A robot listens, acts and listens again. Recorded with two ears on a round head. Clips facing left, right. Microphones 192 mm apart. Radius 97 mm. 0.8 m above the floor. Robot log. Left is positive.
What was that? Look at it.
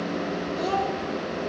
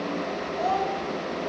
note: The child speaking: about 50° left or 130° left.
cmd yaw +50
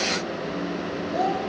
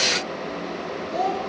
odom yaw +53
end: Found it: a child speaking, straight ahead.